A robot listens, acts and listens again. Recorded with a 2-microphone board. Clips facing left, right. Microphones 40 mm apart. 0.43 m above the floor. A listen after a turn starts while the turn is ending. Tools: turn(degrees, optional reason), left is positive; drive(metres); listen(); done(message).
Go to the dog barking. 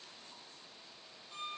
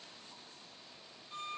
listen()
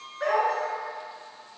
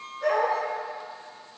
turn(degrees=55, reason="The dog barking: about 55° left or 125° left.")
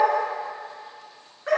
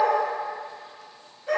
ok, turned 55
turn(degrees=75, reason="So it is at 75° left.")
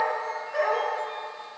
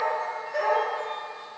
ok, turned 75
turn(degrees=15, reason="The dog barking is now 15° left.")
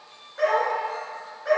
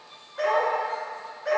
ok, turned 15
drive(metres=1.0)
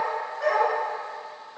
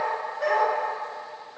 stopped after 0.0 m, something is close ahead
done("Blocked. The dog barking is further on, straight ahead.")